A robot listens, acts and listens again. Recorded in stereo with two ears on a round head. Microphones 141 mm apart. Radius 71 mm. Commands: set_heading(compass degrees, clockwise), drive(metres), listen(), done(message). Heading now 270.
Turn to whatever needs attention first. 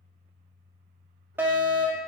set_heading(300)
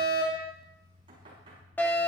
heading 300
set_heading(285)
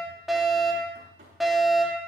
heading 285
done("Facing the fire alarm, 2 to 4 m away.")